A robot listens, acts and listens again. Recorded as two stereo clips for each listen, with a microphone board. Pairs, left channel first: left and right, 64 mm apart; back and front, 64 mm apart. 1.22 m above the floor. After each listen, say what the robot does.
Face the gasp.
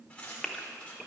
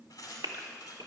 Found it: a gasp, straight ahead, 1 to 2 m away.